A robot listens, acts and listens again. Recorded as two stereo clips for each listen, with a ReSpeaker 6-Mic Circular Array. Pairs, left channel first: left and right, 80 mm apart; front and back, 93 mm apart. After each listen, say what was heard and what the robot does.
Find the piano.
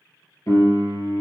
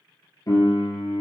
The piano: 45° left. Turn 45° left.
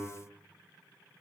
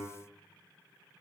The piano is now 10° left. Turn 10° left.
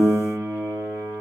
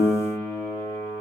Facing the piano, 1 to 2 m away.